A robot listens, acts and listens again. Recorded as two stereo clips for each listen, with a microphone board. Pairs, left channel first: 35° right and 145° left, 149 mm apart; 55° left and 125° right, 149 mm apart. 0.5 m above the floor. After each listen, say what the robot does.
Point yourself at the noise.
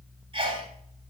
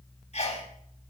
Turn 95° left.
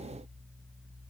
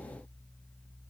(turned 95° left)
I heard a sneeze from this way, but can't make it out now.